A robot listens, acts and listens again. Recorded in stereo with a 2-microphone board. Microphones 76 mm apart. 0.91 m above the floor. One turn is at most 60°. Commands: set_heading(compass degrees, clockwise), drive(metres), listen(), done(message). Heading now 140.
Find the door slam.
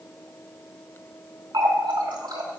listen()
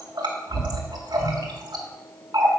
listen()
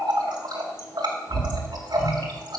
done("I can't make out a door slam to turn to.")